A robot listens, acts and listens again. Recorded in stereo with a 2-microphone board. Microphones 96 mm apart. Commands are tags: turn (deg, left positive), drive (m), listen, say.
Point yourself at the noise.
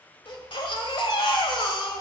<turn deg="60"/>
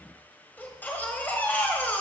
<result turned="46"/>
<turn deg="20"/>
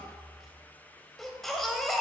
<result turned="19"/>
<say>Facing the baby crying, 1 to 2 m away.</say>